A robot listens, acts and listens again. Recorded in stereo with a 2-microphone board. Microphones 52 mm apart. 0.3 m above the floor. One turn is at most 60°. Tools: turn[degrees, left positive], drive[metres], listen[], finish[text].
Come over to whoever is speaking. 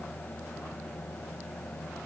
Action: listen[]
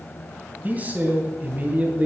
Thought: The man speaking: about 30° right or 150° right.
Action: turn[-30]
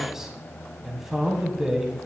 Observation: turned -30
Thought: So it is at 10° right.
Action: turn[-10]
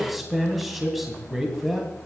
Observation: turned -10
Action: drive[1.0]
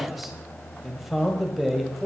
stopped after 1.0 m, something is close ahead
Action: finish[Arrived at the man speaking, straight ahead.]